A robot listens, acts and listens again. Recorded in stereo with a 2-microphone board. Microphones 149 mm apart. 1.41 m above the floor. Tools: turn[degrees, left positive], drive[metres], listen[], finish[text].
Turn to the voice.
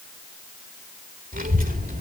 Thought: The child speaking: about 70° right or 110° right.
Action: turn[-70]
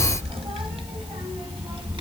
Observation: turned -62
Thought: So it is at 35° right.
Action: turn[-35]
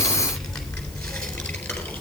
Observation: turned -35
Action: finish[Found it: a child speaking, straight ahead.]